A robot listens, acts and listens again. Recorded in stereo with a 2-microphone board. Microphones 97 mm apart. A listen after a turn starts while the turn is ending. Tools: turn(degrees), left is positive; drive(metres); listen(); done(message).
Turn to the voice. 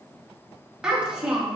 turn(degrees=-30)
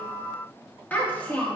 turn(degrees=20)
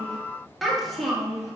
done("Found it: a child speaking, straight ahead.")